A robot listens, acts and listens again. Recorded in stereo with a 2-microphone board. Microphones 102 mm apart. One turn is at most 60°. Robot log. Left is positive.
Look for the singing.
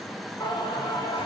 note: The singing: about 45° left or 135° left.
cmd yaw +45
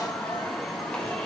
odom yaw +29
note: So it is at 10° left.
cmd yaw +10
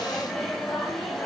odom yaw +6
end: Found it: singing, straight ahead, over 4 m away.